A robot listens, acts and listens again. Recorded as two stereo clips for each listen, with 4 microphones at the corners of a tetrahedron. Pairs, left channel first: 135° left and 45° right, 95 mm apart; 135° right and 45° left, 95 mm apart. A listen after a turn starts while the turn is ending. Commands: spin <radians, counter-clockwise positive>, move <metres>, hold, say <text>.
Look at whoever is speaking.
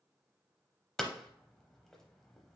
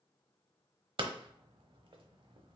hold
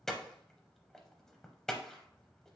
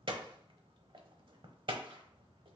hold
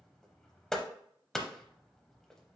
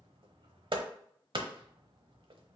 say I can't make out anyone speaking, only hammering.